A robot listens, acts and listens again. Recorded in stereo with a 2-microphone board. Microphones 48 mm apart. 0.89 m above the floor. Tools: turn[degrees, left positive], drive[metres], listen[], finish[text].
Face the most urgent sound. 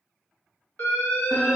Thought: The alarm: about 35° left or 145° left.
Action: turn[35]
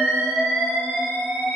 Thought: So it is at 10° left.
Action: turn[10]
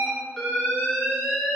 Action: finish[Found it: an alarm, straight ahead.]